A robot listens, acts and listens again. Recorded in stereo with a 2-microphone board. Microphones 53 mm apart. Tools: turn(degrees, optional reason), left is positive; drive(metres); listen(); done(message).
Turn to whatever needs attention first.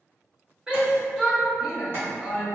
turn(degrees=-30)
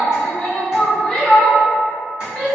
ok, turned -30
turn(degrees=20, reason="So it is at 20° left.")
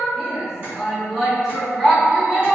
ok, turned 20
done("Found it: a shout, straight ahead, 1 to 2 m away.")